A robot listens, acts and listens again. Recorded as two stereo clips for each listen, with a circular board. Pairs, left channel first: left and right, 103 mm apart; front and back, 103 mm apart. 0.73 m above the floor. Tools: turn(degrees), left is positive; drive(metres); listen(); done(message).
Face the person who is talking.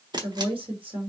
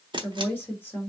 turn(degrees=-70)
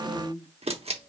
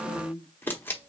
done("Facing the woman speaking.")